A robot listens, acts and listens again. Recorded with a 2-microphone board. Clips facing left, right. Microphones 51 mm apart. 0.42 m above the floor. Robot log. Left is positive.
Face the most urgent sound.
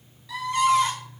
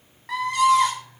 note: The scream: about 55° right or 125° right.
cmd yaw -55
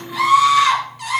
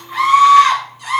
note: So it is at 55° right.
cmd yaw -55
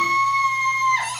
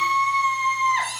note: The scream is now 15° right.
cmd yaw -15
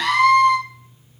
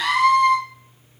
end: Found it: a scream, straight ahead.